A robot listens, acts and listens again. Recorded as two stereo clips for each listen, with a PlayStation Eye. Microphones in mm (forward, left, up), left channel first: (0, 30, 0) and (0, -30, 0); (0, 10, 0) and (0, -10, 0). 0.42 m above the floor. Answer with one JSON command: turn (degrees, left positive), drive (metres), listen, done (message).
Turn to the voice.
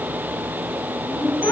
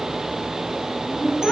{"turn": 70}
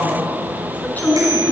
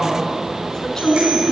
{"turn": 30}
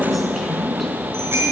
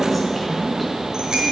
{"done": "Found it: a woman speaking, straight ahead, over 4 m away."}